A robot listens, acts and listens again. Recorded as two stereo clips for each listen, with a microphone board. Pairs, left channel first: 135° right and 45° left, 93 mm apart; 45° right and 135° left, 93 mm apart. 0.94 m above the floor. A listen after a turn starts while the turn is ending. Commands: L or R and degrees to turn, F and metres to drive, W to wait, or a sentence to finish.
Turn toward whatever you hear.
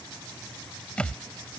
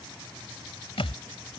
R55
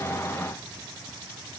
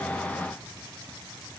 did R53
I heard a thud from this way, but can't make it out now.